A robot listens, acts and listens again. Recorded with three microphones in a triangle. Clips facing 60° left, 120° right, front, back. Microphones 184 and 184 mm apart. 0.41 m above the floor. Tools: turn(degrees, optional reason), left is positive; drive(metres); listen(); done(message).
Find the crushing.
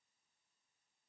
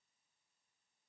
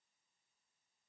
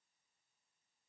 listen()
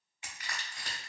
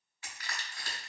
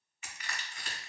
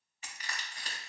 turn(degrees=125, reason="The crushing: 125° left.")
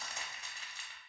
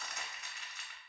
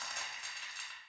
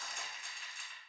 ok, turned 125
done("Found it: crushing, straight ahead, under 1 m away.")